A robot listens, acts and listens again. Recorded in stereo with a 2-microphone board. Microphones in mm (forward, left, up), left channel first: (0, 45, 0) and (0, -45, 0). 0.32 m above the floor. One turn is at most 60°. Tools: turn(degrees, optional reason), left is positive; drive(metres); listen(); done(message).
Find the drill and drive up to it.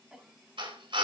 turn(degrees=-60, reason="The drill: about 70° right or 110° right.")
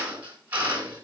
turn(degrees=-20, reason="So it is at 20° right.")
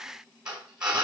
turn(degrees=-10, reason="The drill is now 10° right.")
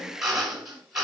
drive(metres=1.0)
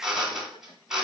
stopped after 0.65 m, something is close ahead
turn(degrees=-10, reason="The drill is now 10° right.")
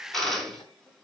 done("Something is in my way. I am facing the drill but have not reached it.")